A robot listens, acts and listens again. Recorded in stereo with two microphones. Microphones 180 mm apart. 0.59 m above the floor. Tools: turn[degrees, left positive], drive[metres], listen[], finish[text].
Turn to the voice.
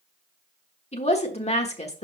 Thought: The woman speaking: about 35° left or 145° left.
Action: turn[35]
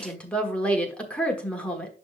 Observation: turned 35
Action: finish[Facing the woman speaking.]